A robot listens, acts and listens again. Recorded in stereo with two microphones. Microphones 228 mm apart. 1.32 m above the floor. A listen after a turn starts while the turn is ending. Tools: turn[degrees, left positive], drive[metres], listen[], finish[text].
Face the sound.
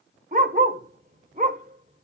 Thought: The dog barking: about 35° right or 145° right.
Action: turn[-35]
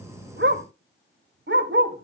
Thought: So it is at 100° right.
Action: turn[-100]
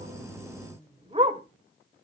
Thought: The dog barking is now 30° right.
Action: turn[-30]
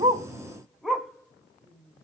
Action: finish[Facing the dog barking.]